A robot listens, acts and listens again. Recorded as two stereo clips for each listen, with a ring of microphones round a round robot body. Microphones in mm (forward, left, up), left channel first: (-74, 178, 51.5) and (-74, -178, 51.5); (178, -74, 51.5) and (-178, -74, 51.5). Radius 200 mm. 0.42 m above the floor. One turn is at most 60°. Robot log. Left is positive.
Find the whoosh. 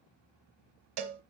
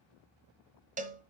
cmd idle
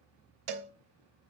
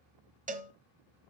cmd idle
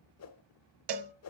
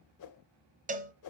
note: The whoosh: 40° left.
cmd yaw +40
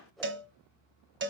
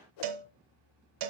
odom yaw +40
end: Facing the whoosh.